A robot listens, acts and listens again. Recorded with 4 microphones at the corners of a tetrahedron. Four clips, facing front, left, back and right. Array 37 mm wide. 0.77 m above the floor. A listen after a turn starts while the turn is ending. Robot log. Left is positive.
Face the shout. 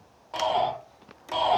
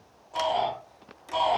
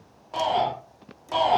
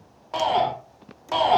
note: The shout: 85° right.
cmd yaw -85
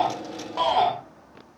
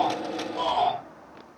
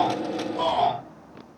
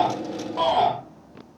note: The shout is now 20° right.
cmd yaw -20
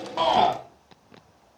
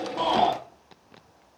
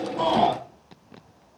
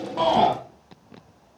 end: Found it: a shout, straight ahead.